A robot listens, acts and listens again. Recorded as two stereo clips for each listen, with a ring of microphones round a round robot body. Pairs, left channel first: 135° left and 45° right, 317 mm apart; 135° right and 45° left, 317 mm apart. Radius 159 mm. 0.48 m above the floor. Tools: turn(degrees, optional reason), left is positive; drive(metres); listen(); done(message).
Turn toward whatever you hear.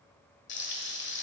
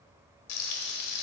turn(degrees=-170, reason="The frying: 170° right.")
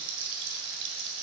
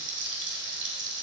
turn(degrees=-10, reason="The frying is now 10° right.")
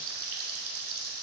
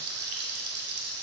done("Facing the frying, 1 to 2 m away.")